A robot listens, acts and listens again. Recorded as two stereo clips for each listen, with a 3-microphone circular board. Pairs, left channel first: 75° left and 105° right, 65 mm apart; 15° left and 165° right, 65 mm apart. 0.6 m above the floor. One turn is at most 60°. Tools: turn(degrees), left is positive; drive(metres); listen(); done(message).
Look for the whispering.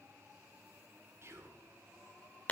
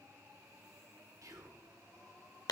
turn(degrees=-60)
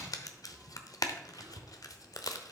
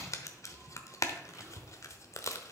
turn(degrees=-60)
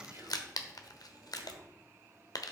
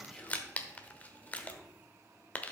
turn(degrees=-60)
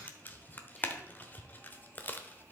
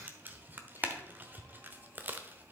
turn(degrees=-10)
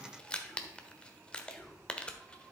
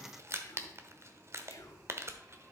done("Found it: whispering, straight ahead, 1 to 2 m away.")